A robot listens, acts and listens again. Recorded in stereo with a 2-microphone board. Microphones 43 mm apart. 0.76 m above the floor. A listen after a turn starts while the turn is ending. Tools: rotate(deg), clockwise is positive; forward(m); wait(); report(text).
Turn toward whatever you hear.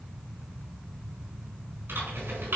rotate(65)
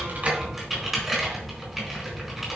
report("Facing the typing on a keyboard.")